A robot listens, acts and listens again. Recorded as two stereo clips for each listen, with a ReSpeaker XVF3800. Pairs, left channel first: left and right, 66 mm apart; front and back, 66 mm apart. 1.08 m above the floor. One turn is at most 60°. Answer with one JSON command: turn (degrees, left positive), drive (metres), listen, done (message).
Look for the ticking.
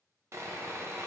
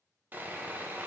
{"listen": true}
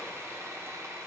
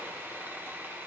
{"listen": true}
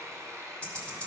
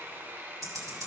{"turn": 60}
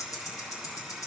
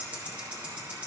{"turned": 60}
{"turn": 60}
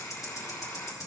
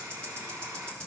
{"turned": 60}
{"turn": 60}
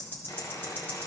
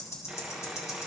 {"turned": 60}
{"turn": 35}
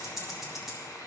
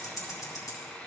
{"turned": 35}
{"done": "Facing the ticking, 1 to 2 m away."}